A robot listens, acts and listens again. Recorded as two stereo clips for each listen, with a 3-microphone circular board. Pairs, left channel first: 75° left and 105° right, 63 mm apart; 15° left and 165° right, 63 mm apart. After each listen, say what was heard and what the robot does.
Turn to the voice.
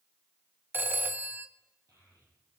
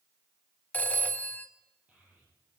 The child speaking: 100° right. Turn 100° right.
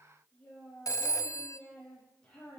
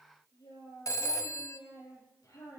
Facing the child speaking, over 4 m away.